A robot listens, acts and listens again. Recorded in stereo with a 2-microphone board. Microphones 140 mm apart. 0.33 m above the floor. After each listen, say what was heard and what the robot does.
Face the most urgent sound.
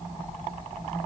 Keep listening.
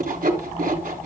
Keep listening.
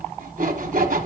I can't make out anything urgent, only sawing.